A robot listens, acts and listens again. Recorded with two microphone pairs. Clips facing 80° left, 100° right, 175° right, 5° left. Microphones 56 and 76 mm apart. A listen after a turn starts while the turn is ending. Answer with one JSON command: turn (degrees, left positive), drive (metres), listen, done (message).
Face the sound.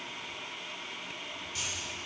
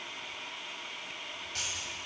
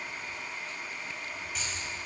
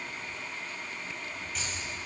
{"turn": -85}
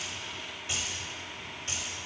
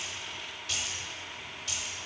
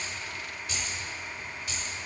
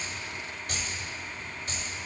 {"turn": 35}
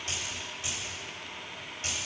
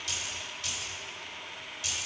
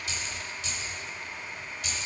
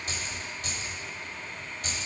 {"turn": 40}
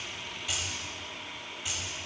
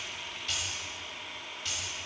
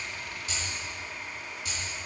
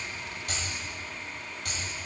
{"done": "Found it: keys jangling, straight ahead."}